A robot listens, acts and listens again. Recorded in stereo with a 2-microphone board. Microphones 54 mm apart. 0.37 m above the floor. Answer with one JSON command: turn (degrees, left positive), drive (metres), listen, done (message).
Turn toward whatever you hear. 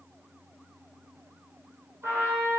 {"turn": -50}
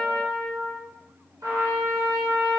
{"turn": -80}
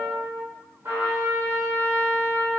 {"turn": -45}
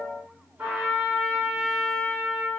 {"turn": -25}
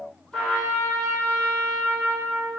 {"done": "Found it: a trumpet, straight ahead, 1 to 2 m away."}